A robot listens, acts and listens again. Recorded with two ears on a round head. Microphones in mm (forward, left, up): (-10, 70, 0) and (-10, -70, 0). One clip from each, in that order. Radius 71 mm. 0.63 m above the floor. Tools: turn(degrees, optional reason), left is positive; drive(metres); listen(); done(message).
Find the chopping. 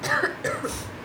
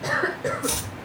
turn(degrees=-70, reason="The chopping: about 70° right or 110° right.")
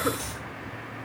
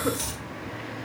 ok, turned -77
turn(degrees=-25, reason="So it is at 25° right.")
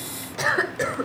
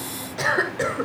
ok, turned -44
turn(degrees=20, reason="Nothing new. It was at 20° left.")
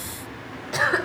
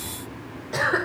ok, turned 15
listen()
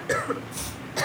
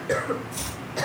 done("Facing the chopping, 1 to 2 m away.")